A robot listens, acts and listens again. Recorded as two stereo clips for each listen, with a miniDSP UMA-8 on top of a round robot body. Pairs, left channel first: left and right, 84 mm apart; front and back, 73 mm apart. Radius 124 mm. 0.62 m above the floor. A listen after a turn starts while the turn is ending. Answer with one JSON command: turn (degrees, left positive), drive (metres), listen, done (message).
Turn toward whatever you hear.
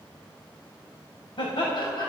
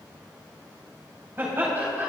{"turn": 115}
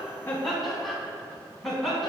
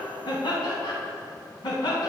{"done": "Found it: laughter, straight ahead."}